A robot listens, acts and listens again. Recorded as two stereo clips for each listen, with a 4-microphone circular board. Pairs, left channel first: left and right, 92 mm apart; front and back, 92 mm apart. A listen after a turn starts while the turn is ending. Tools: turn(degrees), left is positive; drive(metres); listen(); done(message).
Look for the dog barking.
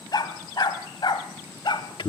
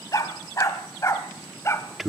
turn(degrees=60)
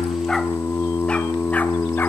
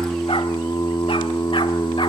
listen()
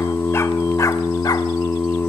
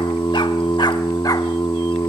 listen()
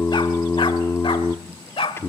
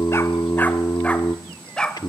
turn(degrees=80)
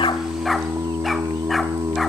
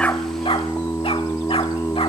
listen()
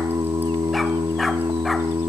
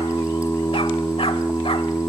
listen()
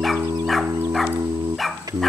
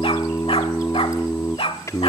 done("Facing the dog barking, 1 to 2 m away.")